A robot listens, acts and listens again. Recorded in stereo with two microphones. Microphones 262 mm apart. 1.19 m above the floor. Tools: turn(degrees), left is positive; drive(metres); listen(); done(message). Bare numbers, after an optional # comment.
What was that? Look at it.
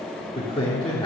# The man speaking: about 20° left or 160° left.
turn(20)
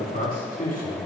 # The man speaking: about 30° left or 150° left.
turn(30)
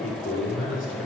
# So it is at 125° left.
turn(125)
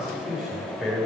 done("Facing the man speaking.")